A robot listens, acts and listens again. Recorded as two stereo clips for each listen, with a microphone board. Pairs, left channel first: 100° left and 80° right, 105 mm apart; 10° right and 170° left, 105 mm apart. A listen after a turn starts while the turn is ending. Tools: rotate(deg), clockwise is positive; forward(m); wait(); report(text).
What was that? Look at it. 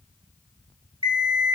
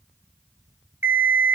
rotate(120)
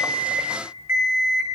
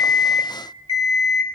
rotate(10)
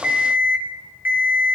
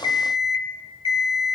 report("Facing the alarm clock, 1 to 2 m away.")